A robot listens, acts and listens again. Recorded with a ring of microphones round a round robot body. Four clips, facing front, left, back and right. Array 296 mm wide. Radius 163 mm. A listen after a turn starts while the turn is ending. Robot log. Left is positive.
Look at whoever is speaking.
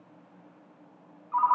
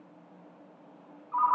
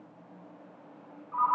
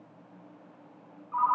cmd idle
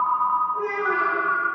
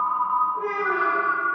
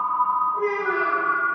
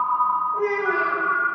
note: The child speaking: 90° right.
cmd yaw -90
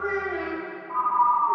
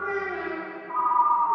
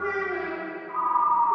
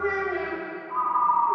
note: The child speaking is now 45° right.
cmd yaw -45
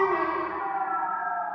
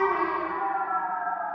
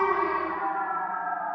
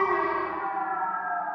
cmd idle
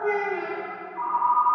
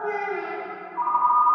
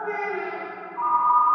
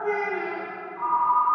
note: The child speaking is now 10° left.
cmd yaw +10
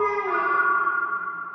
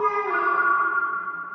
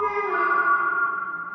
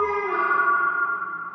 cmd idle
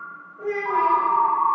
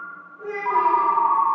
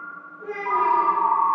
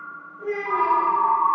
end: Found it: a child speaking, straight ahead.